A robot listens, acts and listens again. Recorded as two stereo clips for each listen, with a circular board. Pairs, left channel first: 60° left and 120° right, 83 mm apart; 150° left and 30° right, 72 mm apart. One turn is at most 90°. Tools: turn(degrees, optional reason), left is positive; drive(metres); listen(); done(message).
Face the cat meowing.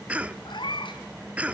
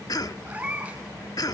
turn(degrees=40, reason="The cat meowing: 40° left.")
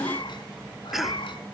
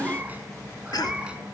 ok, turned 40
turn(degrees=45, reason="The cat meowing is now 45° left.")
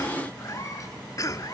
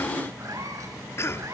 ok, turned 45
turn(degrees=15, reason="The cat meowing is now 15° left.")
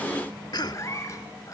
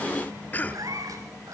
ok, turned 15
done("Facing the cat meowing.")